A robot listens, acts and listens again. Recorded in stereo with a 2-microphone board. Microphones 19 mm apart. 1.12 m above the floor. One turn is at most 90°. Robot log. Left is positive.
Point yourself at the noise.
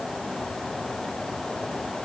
cmd idle
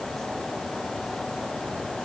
cmd idle
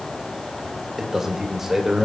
note: The man speaking: about 20° right or 160° right.
cmd yaw -20
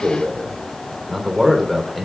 end: Found it: a man speaking, straight ahead.